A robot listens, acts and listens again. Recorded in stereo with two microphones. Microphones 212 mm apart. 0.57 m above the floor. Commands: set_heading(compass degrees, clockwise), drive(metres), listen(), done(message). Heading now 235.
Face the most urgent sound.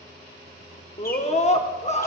set_heading(200)
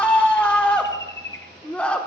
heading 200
done("Facing the scream, 1 to 2 m away.")